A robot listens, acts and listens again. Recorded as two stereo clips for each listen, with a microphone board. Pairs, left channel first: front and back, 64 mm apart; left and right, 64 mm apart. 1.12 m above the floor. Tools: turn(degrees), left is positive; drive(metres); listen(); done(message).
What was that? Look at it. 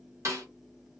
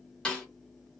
turn(degrees=165)
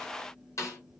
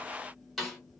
done("Facing the snare drum, 1 to 2 m away.")